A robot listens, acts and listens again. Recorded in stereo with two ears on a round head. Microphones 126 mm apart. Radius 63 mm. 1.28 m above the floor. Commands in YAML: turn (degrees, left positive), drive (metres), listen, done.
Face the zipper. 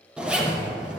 turn: -30
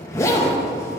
turn: 20
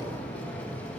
turn: 10
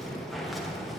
done: "Found it: a zipper, straight ahead, under 1 m away."